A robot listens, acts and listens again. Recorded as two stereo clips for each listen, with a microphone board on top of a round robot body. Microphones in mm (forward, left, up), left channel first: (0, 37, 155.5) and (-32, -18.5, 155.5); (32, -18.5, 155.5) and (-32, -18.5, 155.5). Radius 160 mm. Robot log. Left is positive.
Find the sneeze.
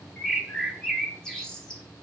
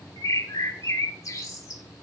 cmd idle
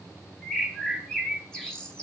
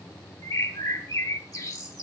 cmd idle
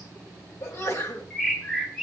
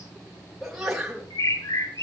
note: The sneeze: 90° left.
cmd yaw +90
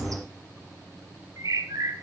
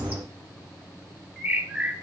end: Facing where the sneeze came from. I can't hear it now.